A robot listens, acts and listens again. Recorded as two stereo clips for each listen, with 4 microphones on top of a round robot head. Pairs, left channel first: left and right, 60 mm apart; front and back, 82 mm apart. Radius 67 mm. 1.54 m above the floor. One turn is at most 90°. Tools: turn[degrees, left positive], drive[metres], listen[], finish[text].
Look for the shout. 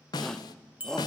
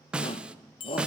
Thought: The shout: 10° left.
Action: turn[10]
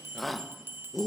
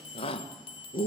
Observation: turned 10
Action: finish[Facing the shout, 1 to 2 m away.]